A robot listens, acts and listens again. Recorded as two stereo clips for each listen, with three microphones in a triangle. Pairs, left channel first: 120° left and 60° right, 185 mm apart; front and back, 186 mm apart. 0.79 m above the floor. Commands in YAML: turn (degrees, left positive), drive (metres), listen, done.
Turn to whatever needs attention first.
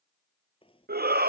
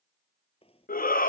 turn: -35
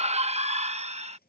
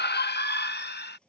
turn: -10
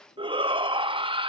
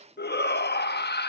done: "Facing the shout."